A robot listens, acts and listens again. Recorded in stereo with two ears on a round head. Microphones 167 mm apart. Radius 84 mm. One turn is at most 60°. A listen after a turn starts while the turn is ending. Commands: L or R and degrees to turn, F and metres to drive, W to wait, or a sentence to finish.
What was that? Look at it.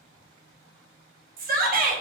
R50
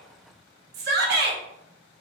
R60
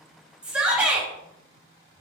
Found it: a shout, straight ahead, under 1 m away.